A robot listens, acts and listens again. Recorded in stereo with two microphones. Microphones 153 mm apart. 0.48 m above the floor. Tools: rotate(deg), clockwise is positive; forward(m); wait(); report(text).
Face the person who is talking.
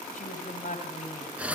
rotate(-60)
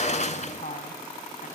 rotate(-55)
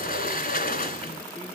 wait()
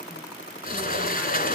wait()
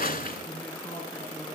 rotate(-15)
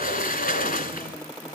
wait()
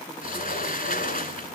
wait()
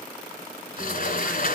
report("I heard a woman speaking from this way, but can't make it out now.")